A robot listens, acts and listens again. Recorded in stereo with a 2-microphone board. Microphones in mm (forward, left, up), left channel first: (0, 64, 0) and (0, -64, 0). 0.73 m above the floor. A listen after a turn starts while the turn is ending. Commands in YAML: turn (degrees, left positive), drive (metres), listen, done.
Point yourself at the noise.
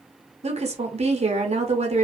turn: -55
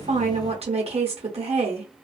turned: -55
turn: -60
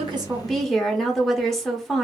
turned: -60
done: "Found it: a woman speaking, straight ahead, under 1 m away."